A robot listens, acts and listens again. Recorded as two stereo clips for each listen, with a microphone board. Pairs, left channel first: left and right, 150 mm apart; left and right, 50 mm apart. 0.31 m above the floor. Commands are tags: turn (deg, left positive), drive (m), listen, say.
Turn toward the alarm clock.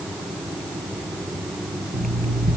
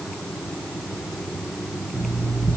<turn deg="-70"/>
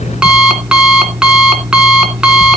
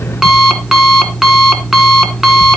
<say>Found it: an alarm clock, straight ahead, 2 to 4 m away.</say>